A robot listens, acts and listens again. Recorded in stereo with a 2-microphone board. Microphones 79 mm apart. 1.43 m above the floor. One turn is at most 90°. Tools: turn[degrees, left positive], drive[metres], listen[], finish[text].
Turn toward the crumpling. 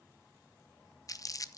Thought: The crumpling: about 45° left or 135° left.
Action: turn[45]
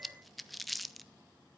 Action: finish[Found it: crumpling, straight ahead.]